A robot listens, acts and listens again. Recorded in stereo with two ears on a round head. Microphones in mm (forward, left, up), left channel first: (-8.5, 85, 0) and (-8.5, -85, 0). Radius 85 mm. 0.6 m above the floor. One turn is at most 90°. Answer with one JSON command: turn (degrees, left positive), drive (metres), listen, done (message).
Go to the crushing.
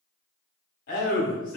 {"listen": true}
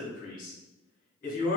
{"listen": true}
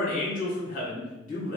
{"done": "I can't make out crushing, only a man speaking."}